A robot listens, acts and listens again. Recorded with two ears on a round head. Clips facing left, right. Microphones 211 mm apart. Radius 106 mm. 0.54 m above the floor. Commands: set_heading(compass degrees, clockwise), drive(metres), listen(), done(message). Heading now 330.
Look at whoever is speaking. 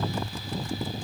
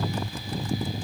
listen()
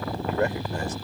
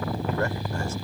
set_heading(315)
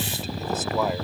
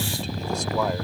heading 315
listen()
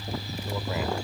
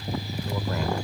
listen()
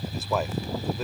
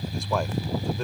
done("Found it: a man speaking, straight ahead.")